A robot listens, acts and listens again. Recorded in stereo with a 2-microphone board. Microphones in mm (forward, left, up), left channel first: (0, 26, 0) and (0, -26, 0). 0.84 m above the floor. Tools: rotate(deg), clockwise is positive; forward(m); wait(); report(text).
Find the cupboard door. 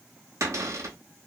rotate(90)
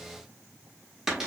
rotate(10)
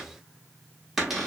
report("Facing the cupboard door, 1 to 2 m away.")